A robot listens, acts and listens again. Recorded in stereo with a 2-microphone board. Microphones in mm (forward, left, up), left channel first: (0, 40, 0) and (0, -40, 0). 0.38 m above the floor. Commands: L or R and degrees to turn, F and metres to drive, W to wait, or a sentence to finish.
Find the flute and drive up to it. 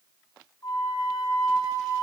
L55
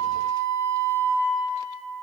L65
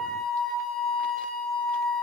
F1.0
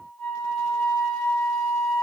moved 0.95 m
L10
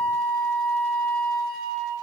F1.0
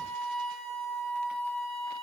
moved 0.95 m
R10
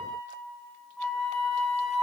F1.0
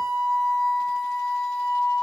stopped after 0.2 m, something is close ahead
L10
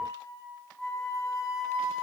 I am next to the flute.